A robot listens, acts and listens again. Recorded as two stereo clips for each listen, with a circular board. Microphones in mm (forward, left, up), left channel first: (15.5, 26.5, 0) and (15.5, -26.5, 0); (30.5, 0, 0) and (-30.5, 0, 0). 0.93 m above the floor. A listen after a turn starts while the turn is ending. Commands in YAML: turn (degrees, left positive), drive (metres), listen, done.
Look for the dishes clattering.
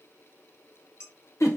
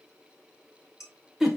turn: -20
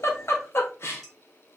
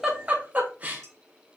listen: true
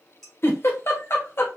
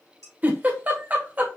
done: "Found it: dishes clattering, straight ahead."